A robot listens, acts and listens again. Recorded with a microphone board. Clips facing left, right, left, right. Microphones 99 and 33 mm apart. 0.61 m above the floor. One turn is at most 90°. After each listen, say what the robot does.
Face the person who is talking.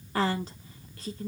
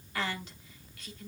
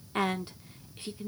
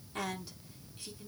Turn 40° left.
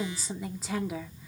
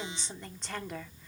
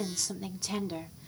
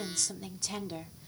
Turn 10° left.
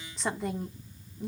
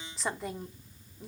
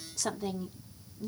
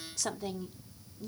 Found it: a woman speaking, straight ahead.